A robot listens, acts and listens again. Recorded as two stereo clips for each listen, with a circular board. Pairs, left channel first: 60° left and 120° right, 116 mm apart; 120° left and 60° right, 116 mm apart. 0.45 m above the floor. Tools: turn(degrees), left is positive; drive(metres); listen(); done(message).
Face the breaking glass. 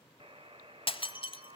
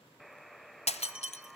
turn(degrees=100)
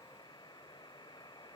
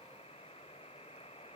done("I heard breaking glass from this way, but can't make it out now.")